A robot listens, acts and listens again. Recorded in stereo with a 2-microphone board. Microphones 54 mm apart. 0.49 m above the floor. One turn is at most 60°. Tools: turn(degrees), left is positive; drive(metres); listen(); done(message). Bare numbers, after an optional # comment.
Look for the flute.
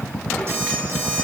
listen()
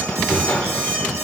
listen()
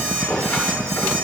done("I can't make out a flute, only an alarm clock and a squeak.")